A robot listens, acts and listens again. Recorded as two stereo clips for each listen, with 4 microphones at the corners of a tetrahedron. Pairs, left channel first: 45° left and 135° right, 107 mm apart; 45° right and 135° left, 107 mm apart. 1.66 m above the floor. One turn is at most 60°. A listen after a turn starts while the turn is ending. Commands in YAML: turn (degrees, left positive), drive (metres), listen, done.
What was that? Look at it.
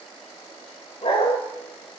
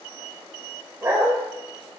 turn: 60
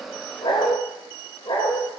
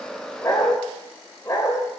done: "Facing the dog barking, 2 to 4 m away."